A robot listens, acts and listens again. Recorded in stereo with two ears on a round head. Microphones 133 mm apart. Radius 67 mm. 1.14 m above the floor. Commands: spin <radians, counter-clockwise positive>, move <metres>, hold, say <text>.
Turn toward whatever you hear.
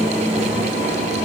hold
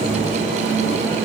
hold
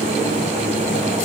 say I can't make out anything to turn to.